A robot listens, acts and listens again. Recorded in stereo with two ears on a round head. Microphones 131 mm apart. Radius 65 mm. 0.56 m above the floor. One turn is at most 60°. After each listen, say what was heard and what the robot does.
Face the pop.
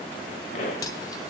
The pop: about 55° left or 125° left. Turn 55° left.
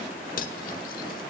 Keep listening.
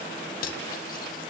I heard a pop, but can't make it out now. It was about straight ahead or 70° left.